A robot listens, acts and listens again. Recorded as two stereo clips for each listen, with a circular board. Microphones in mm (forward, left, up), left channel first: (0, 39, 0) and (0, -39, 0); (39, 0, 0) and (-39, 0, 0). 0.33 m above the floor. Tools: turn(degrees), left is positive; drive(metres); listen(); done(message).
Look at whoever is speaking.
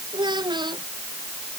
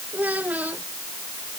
turn(degrees=-110)
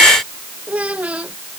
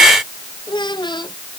turn(degrees=-15)
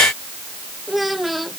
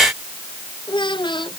done("Found it: a child speaking, straight ahead.")